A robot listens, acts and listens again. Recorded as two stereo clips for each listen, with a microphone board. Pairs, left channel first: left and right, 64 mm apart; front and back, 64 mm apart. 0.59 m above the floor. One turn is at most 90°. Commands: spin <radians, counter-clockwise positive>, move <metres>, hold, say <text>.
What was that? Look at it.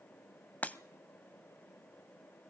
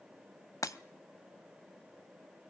spin 0.44
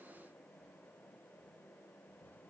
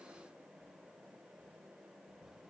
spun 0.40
say I heard breaking glass from this way, but can't make it out now.